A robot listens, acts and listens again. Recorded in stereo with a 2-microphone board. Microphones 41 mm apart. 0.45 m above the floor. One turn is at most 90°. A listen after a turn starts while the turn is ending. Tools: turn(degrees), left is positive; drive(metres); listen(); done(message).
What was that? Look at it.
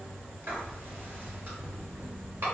turn(degrees=-55)
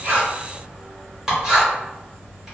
turn(degrees=-15)
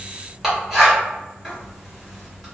done("Found it: writing, straight ahead.")